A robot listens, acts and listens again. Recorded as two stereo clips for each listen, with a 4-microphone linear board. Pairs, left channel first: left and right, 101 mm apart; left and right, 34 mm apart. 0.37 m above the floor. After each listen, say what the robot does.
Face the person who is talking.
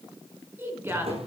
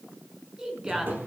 Turn 20° right.
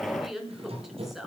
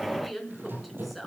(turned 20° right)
Found it: a woman speaking, straight ahead, over 4 m away.